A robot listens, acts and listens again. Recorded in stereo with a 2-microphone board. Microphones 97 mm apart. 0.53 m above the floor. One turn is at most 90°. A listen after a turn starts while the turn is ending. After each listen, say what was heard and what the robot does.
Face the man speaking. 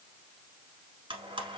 Keep listening.
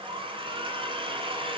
Keep listening.
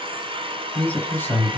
The man speaking: about 25° left or 155° left. Turn 25° left.
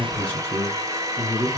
The man speaking: about 30° left or 150° left. Turn 30° left.
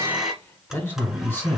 The man speaking: about 15° left or 165° left. Turn 15° left.
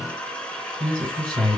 Facing the man speaking, 2 to 4 m away.